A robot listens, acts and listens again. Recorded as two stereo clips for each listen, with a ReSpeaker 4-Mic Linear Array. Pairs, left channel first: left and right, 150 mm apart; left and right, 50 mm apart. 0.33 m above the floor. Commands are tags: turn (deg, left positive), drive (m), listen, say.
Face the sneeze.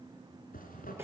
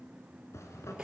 <listen/>
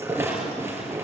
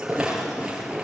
<listen/>
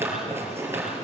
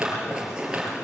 <say>I can't make out a sneeze, only a zipper and a rattle.</say>